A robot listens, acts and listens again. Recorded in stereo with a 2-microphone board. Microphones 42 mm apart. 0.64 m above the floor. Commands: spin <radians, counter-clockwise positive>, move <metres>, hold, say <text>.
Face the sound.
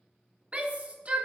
spin -0.61
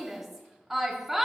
spin -0.17
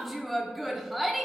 say Found it: a shout, straight ahead, under 1 m away.